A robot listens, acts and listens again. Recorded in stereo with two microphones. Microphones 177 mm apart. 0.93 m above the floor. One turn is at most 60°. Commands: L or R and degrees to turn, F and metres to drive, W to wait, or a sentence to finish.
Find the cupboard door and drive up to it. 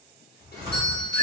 R20
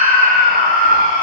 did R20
W
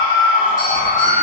W
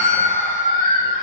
I heard a cupboard door, but can't make it out now. It was about straight ahead or 140° right. I did not reach it.